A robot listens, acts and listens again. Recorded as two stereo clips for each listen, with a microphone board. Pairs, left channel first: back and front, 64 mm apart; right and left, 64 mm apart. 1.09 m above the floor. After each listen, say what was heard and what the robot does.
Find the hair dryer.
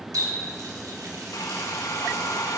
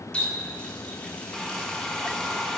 The hair dryer: 170° right. Turn 170° right.
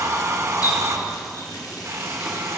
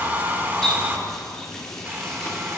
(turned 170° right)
The hair dryer is now 40° left. Turn 40° left.
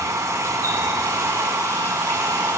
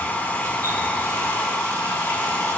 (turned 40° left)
The hair dryer is now 20° right. Turn 20° right.
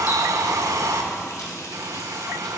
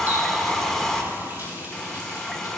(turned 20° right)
Found it: a hair dryer, straight ahead, 1 to 2 m away.